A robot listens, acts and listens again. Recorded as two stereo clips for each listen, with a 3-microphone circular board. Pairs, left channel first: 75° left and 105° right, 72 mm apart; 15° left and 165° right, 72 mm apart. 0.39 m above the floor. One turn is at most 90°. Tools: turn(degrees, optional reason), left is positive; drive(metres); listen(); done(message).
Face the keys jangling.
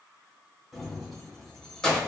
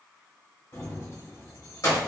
done("Found it: keys jangling, straight ahead, 1 to 2 m away.")